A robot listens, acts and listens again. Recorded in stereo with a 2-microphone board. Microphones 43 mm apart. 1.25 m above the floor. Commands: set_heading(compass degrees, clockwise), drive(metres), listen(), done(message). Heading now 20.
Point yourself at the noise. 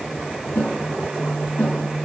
set_heading(320)
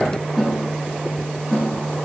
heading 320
done("Facing the snare drum, over 4 m away.")